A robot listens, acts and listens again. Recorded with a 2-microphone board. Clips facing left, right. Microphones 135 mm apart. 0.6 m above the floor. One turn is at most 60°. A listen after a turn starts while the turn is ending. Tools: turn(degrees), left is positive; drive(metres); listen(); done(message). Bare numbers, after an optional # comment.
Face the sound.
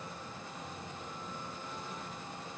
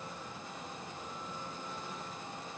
listen()
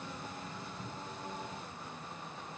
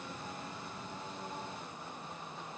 listen()
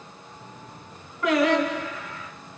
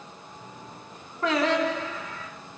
# The singing: about 25° right or 155° right.
turn(-25)
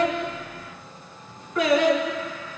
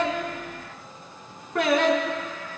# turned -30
# So it is at 125° right.
turn(-60)
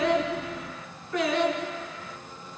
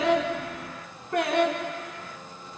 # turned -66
# The singing is now 55° right.
turn(-55)
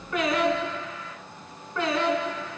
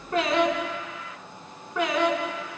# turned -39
# The singing is now 15° right.
turn(-15)
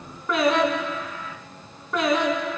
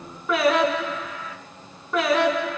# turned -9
done("Found it: singing, straight ahead, 2 to 4 m away.")